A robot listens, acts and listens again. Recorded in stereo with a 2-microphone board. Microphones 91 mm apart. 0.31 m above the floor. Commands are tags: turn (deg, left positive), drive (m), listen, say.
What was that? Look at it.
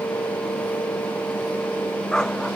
<turn deg="30"/>
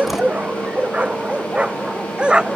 <turn deg="-10"/>
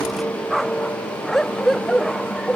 <say>Facing the dog barking.</say>